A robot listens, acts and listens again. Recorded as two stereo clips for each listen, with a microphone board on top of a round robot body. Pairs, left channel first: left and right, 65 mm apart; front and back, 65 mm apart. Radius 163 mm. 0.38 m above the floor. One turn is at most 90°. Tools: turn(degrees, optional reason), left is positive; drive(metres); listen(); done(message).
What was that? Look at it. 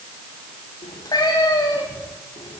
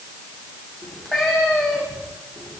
turn(degrees=90, reason="The cat meowing: 90° left.")
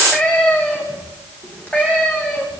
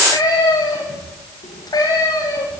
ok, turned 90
turn(degrees=25, reason="The cat meowing is now 25° left.")
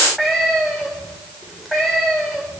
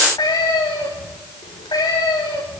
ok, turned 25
done("Facing the cat meowing.")